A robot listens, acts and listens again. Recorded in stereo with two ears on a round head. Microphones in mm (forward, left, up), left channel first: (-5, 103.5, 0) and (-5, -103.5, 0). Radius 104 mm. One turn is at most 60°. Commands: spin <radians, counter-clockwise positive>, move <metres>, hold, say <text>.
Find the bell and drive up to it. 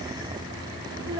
hold
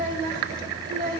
hold
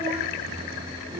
say I can't make out a bell to turn to.